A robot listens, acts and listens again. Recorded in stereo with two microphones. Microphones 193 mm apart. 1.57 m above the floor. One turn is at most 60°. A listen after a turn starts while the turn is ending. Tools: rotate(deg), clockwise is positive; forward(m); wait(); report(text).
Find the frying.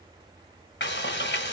rotate(-60)
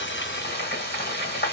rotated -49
rotate(-60)
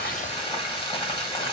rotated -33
rotate(-25)
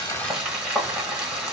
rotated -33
report("Facing the frying.")